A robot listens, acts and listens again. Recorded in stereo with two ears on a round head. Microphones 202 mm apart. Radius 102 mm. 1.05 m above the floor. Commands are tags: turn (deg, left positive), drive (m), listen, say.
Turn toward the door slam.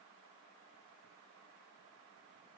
<listen/>
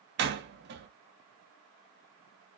<turn deg="-50"/>
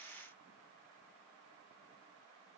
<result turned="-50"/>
<listen/>
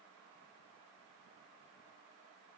<say>I heard a door slam, but can't make it out now. It was about straight ahead or 80° right.</say>